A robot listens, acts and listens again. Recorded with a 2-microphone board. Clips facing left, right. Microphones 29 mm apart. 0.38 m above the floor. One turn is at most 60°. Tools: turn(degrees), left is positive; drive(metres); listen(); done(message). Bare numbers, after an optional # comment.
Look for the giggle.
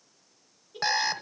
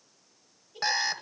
# The giggle: about 40° left or 140° left.
turn(40)
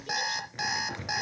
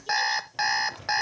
listen()
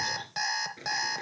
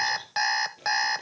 listen()
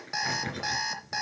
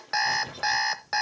done("I heard a giggle, but can't make it out now. It was about straight ahead or 100° left.")